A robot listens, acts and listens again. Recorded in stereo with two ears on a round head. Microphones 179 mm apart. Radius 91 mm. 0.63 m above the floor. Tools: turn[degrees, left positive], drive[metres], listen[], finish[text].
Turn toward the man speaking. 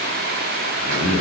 Thought: The man speaking: about 40° left or 140° left.
Action: turn[40]
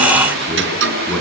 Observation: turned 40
Action: finish[Found it: a man speaking, straight ahead, over 4 m away.]